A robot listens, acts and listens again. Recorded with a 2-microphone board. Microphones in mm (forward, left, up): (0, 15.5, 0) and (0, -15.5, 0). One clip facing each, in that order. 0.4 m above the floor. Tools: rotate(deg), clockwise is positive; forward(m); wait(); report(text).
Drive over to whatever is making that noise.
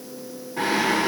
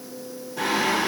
rotate(-40)
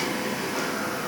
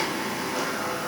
forward(1.0)
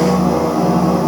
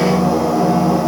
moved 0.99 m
forward(1.0)
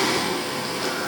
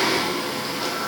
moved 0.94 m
rotate(10)
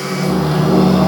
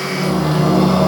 forward(1.0)
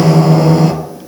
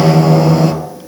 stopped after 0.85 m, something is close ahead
report("I am next to the singing.")